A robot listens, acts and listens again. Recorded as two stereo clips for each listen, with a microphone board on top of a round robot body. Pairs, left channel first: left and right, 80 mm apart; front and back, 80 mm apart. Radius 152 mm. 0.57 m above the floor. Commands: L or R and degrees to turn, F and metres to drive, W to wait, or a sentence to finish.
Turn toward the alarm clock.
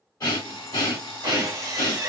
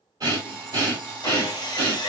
L100
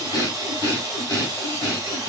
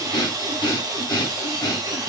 W
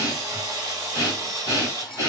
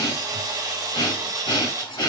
Facing the alarm clock.